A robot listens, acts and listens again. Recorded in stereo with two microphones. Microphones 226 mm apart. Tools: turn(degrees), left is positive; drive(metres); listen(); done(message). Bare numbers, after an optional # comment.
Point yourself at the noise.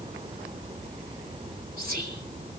# The whispering: about 45° right or 135° right.
turn(-45)
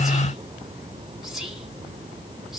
done("Found it: whispering, straight ahead, 2 to 4 m away.")